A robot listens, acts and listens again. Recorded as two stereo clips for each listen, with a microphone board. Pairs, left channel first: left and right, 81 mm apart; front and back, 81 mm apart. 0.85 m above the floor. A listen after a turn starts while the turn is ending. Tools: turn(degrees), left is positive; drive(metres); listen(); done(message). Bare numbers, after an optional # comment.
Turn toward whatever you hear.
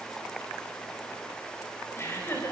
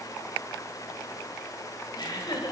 # The laughter: 30° left.
turn(30)
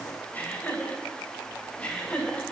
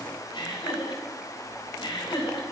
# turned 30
# The laughter is now 15° left.
turn(15)
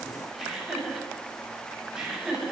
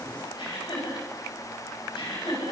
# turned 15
# The laughter is now 10° right.
turn(-10)
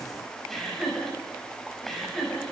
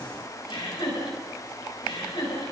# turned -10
done("Found it: laughter, straight ahead, over 4 m away.")